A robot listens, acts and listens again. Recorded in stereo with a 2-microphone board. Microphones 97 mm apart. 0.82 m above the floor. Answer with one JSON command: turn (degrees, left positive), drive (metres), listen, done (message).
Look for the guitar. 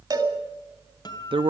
{"turn": 50}
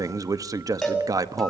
{"listen": true}
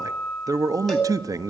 {"done": "Found it: a guitar, straight ahead, 2 to 4 m away."}